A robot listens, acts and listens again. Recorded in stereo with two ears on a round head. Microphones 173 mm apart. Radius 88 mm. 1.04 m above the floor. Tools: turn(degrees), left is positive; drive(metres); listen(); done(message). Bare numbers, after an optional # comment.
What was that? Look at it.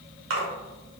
turn(-90)
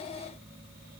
done("I heard a splash from this way, but can't make it out now.")